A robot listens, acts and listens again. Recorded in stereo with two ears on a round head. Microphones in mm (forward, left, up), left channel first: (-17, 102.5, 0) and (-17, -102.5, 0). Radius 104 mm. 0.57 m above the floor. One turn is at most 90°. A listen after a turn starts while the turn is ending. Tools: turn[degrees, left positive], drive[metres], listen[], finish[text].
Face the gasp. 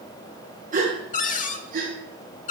Thought: The gasp: about 40° right or 140° right.
Action: turn[-40]
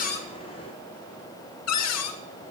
Action: listen[]
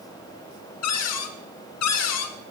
Action: finish[I heard a gasp, but can't make it out now. It was about straight ahead or 100° right.]